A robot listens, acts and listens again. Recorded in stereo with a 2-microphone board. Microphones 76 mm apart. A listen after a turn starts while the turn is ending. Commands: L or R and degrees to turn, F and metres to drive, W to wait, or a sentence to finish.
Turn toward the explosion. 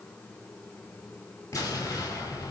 L45
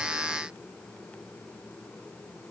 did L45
W
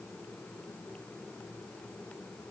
I heard an explosion, but can't make it out now. It was about straight ahead or 90° left.